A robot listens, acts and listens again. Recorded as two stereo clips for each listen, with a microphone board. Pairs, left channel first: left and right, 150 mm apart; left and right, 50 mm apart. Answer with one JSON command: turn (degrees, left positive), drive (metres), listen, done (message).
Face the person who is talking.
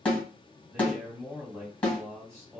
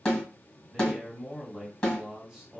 {"turn": -20}
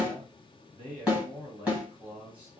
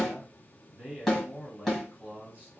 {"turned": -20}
{"turn": -140}
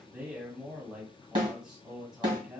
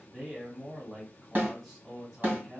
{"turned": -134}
{"done": "Facing the man speaking."}